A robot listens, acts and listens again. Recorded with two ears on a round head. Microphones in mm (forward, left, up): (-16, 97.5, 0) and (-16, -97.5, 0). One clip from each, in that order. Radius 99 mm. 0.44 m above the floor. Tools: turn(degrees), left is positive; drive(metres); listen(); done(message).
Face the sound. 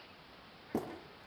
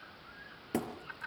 turn(degrees=-75)
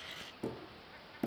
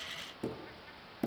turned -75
done("Facing the hammering.")